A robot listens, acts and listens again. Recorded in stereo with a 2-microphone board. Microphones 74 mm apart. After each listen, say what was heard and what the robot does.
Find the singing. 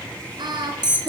The singing: about 70° right or 110° right. Turn 70° right.
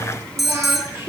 So it is at 30° right. Turn 30° right.
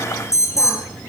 Keep listening.
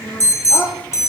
The singing is now 15° left. Turn 15° left.
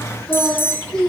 Facing the singing.